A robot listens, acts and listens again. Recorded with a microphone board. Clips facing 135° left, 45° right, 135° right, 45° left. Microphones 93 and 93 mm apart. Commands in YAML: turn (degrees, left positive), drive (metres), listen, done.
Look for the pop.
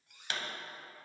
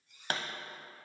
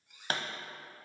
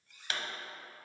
turn: -85
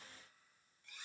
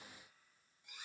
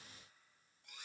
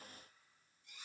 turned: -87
done: "I heard a pop from this way, but can't make it out now."